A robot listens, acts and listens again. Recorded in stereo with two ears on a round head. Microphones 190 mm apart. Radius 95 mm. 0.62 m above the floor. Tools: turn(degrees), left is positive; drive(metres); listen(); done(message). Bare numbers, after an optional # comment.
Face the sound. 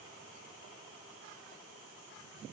listen()
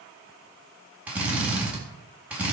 turn(-30)
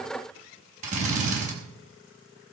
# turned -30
# So it is at 145° right.
turn(-145)
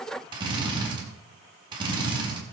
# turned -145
# The drill is now 20° right.
turn(-20)
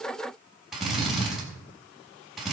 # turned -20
done("Found it: a drill, straight ahead.")